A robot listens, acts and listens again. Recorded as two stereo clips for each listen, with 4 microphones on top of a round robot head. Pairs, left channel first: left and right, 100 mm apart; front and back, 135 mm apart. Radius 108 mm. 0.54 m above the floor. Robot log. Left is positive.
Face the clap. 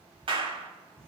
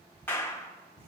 note: The clap: 70° right.
cmd yaw -70
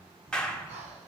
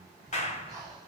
note: The clap is now 10° left.
cmd yaw +10
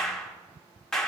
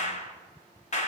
end: Found it: a clap, straight ahead.